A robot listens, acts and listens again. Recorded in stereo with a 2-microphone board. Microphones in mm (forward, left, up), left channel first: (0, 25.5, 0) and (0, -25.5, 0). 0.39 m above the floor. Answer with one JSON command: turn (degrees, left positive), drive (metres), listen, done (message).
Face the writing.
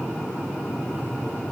{"listen": true}
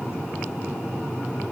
{"listen": true}
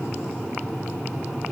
{"done": "I can't make out writing to turn to."}